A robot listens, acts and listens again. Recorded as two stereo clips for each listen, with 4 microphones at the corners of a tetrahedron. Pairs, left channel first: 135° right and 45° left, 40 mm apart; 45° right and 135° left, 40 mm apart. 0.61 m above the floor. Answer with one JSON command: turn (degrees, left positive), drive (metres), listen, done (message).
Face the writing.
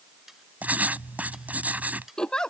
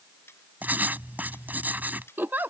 {"turn": 95}
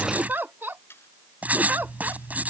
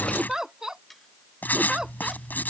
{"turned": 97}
{"done": "Facing the writing."}